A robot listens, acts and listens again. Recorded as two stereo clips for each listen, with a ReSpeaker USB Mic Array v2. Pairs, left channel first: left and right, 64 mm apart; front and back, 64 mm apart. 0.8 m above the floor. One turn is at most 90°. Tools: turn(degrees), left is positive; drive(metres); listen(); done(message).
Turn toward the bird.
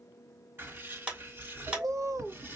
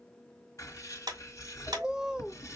turn(degrees=-90)
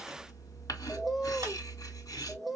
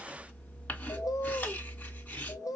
done("Facing the bird.")